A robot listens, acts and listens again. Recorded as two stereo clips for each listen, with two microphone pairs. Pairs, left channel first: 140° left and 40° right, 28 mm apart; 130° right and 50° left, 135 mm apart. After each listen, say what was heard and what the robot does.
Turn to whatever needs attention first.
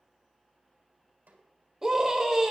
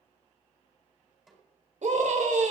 The scream: 30° left. Turn 30° left.
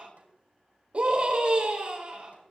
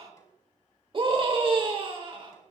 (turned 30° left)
Facing the scream.